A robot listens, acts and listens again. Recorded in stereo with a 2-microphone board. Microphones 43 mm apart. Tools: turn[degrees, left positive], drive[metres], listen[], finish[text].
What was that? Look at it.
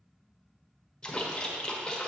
Thought: The splash: about 15° left or 165° left.
Action: turn[15]
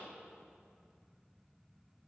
Action: listen[]
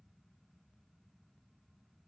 Action: finish[I heard a splash, but can't make it out now. It was about straight ahead or 150° left.]